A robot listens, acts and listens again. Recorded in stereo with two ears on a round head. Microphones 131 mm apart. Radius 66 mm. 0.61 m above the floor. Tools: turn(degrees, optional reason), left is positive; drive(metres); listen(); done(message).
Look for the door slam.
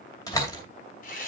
turn(degrees=25, reason="The door slam: about 25° left or 155° left.")
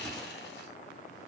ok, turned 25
listen()
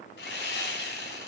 done("I heard a door slam, but can't make it out now. It was about straight ahead or 130° left.")